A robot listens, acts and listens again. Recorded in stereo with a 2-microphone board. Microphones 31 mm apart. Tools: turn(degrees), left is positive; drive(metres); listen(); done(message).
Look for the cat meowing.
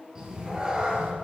turn(degrees=-25)
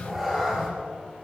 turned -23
done("Found it: a cat meowing, straight ahead, 2 to 4 m away.")